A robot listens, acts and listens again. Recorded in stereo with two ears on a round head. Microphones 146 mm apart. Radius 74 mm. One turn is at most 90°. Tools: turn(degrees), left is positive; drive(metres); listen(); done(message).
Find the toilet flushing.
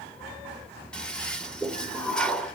turn(degrees=30)
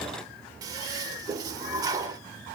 turn(degrees=-20)
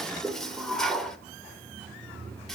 done("Found it: a toilet flushing, straight ahead.")